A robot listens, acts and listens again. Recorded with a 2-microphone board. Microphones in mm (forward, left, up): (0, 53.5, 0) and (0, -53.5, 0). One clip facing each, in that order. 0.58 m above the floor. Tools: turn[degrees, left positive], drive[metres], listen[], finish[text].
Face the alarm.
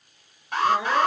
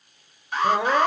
Thought: The alarm: about 60° left or 120° left.
Action: turn[60]
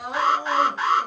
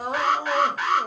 Thought: So it is at 30° left.
Action: turn[30]
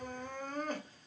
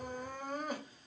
Action: listen[]
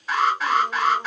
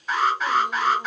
Action: finish[Facing the alarm, 2 to 4 m away.]